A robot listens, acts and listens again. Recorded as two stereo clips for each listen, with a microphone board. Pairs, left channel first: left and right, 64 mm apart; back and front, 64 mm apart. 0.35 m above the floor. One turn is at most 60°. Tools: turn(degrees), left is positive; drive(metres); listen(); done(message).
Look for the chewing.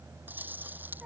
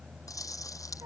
turn(degrees=-60)
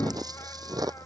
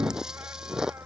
turn(degrees=-60)
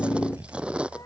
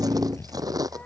turn(degrees=-15)
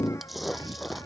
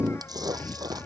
done("Found it: chewing, straight ahead.")